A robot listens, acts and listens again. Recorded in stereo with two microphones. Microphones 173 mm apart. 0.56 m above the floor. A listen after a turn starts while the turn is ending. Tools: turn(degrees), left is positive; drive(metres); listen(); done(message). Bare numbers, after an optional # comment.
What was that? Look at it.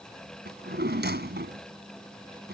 turn(-90)
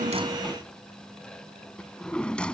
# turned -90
done("Facing the drawer.")